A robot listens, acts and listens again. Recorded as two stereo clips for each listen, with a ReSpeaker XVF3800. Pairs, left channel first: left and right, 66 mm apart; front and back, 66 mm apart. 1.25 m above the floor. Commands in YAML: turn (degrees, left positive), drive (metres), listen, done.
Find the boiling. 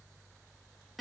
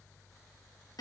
listen: true
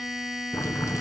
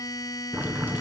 turn: 125
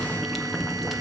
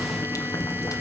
done: "Facing the boiling."